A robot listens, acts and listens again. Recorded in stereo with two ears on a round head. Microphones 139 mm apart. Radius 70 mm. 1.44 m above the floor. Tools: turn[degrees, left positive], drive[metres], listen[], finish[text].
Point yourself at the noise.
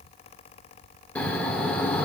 Action: turn[30]
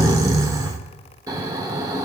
Thought: So it is at 20° right.
Action: turn[-20]
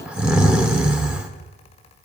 Action: finish[Found it: snoring, straight ahead, 1 to 2 m away.]